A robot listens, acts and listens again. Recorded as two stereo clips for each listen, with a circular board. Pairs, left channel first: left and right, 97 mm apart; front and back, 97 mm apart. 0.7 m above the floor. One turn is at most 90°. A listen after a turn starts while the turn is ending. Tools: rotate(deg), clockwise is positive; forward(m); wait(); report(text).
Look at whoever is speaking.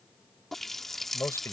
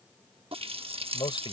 rotate(-25)
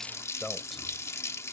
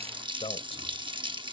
report("Facing the man speaking.")